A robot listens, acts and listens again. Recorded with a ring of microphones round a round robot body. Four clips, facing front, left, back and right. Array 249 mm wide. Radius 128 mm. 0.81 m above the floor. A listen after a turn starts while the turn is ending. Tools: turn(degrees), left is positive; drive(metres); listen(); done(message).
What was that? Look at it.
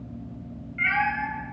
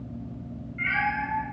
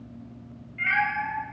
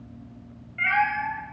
turn(degrees=-50)
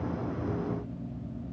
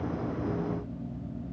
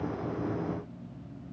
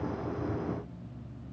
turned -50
listen()
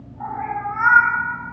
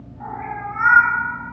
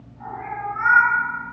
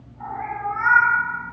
turn(degrees=20)
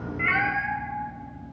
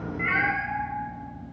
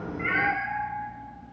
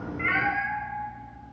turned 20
done("Found it: a cat meowing, straight ahead.")